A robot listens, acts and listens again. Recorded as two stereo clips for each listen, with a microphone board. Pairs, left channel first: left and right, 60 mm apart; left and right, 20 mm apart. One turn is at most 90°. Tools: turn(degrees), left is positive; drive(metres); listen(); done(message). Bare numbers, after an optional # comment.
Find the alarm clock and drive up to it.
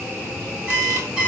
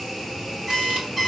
# The alarm clock: about 15° right or 165° right.
turn(-15)
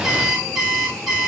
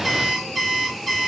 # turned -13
drive(1.0)
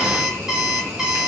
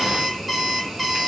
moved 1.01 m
# The alarm clock is now 10° right.
turn(-10)
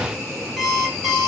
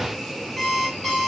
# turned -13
drive(1.0)
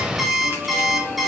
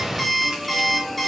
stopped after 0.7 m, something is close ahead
done("Arrived at the alarm clock, straight ahead.")